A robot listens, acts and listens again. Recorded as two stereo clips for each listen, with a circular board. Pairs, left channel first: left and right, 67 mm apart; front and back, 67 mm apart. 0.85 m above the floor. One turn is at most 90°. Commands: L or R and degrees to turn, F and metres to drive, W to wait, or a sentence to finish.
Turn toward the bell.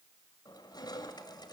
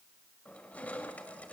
W
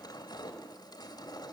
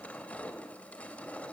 W
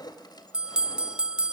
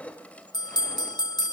R15
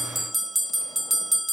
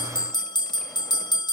Facing the bell.